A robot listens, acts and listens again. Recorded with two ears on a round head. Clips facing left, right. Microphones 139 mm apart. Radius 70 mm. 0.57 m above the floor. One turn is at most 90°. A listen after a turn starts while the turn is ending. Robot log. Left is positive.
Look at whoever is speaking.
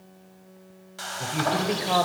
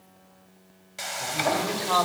note: The woman speaking: about 25° left or 155° left.
cmd yaw +25
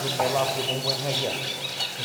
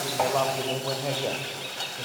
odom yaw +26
end: Found it: a woman speaking, straight ahead.